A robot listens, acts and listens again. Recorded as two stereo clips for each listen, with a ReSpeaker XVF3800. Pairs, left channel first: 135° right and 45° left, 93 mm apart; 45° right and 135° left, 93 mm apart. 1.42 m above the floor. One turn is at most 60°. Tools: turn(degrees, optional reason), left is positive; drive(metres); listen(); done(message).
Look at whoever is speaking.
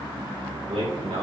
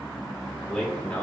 turn(degrees=30, reason="The man speaking: 30° left.")
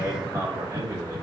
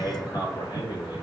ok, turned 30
turn(degrees=-10, reason="The man speaking is now 10° right.")
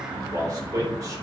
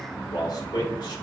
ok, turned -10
done("Found it: a man speaking, straight ahead.")